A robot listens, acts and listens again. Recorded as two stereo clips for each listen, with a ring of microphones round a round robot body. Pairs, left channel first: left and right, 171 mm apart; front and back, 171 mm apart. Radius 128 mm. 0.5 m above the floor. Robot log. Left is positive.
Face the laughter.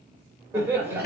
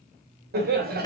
note: The laughter: 170° right.
cmd yaw -170
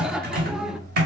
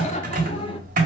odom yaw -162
end: Found it: laughter, straight ahead, 1 to 2 m away.